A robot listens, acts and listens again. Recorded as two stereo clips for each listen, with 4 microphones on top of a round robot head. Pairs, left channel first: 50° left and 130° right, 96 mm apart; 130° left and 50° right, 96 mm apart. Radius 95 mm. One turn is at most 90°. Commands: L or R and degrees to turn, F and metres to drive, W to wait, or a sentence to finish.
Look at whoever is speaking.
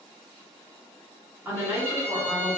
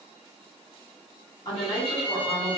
L90
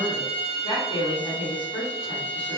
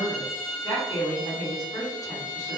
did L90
L80
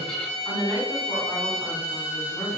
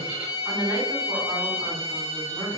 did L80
L15
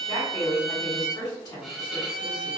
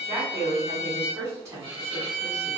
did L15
Facing the woman speaking, 1 to 2 m away.